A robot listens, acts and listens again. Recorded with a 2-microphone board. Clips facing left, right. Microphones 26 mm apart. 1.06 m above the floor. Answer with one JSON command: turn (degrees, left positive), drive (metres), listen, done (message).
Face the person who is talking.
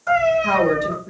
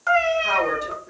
{"turn": -30}
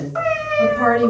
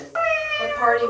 {"turn": -145}
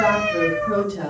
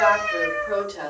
{"turn": -50}
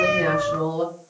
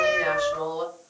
{"done": "Facing the woman speaking, 1 to 2 m away."}